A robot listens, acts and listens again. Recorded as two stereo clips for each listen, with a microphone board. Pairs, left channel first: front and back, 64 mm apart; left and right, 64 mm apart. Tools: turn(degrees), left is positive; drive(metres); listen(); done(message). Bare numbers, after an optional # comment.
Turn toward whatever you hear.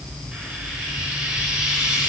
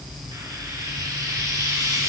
# The frying: 105° right.
turn(-105)
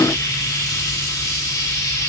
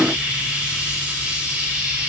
# The frying is now 25° right.
turn(-25)
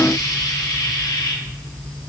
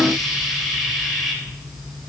done("Found it: frying, straight ahead.")